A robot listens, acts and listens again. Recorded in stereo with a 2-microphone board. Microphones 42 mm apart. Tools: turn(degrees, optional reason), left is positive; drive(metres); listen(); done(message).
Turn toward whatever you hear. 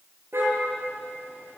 turn(degrees=-75, reason="The car horn: about 75° right or 105° right.")
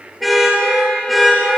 done("Found it: a car horn, straight ahead, over 4 m away.")